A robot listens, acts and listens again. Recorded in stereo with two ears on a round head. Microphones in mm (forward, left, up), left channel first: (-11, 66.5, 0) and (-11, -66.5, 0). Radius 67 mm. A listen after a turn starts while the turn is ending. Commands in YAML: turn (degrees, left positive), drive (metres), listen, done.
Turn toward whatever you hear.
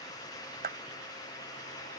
turn: -60
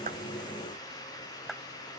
listen: true
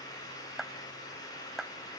done: "Facing the clap."